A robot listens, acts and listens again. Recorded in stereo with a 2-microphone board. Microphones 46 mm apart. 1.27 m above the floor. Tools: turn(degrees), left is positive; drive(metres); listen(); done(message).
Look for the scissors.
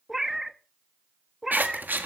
turn(degrees=-45)
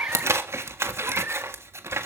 turn(degrees=-90)
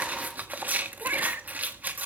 turn(degrees=-40)
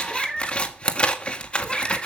turn(degrees=25)
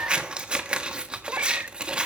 turn(degrees=-20)
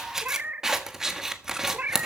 turn(degrees=-10)
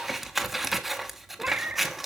done("Facing the scissors.")